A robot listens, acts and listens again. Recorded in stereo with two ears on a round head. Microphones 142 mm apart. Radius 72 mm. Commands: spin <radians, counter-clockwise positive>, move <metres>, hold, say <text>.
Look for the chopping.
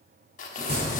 spin -0.79
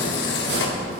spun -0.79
spin -1.57
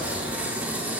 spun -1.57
hold
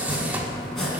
say Facing the chopping.